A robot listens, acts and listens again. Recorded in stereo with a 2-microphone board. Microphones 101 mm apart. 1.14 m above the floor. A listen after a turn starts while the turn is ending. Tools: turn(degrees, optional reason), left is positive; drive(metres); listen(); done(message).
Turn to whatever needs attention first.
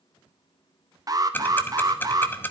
turn(degrees=-40, reason="The alarm: about 40° right or 140° right.")
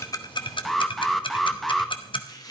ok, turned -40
done("Found it: an alarm, straight ahead.")